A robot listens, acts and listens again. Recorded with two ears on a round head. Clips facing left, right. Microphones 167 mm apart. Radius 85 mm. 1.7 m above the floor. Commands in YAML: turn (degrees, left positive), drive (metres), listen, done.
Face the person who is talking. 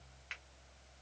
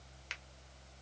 listen: true
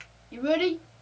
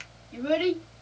turn: 50
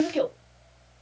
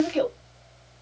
done: "Found it: a child speaking, straight ahead."